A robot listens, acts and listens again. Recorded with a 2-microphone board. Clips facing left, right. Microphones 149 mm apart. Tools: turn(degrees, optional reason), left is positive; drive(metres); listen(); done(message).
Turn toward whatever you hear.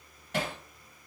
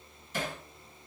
turn(degrees=70, reason="The hammering: about 70° left or 110° left.")
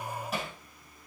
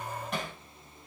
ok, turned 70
done("Facing the hammering.")